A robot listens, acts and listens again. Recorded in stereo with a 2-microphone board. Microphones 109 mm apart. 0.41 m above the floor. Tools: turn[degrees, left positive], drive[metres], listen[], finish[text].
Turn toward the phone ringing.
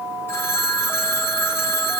Thought: The phone ringing: about 25° left or 155° left.
Action: turn[25]
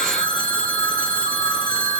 Thought: So it is at 135° left.
Action: turn[135]
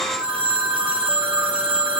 Thought: The phone ringing is now 10° right.
Action: turn[-10]
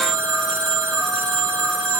Action: finish[Found it: a phone ringing, straight ahead, 2 to 4 m away.]